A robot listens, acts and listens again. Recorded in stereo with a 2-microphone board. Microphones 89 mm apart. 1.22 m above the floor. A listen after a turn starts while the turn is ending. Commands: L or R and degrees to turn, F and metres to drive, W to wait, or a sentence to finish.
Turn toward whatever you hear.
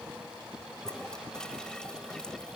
L30
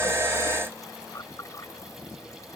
L145
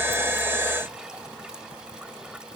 W
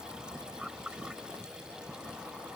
R10
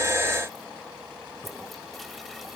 Facing the toilet flushing.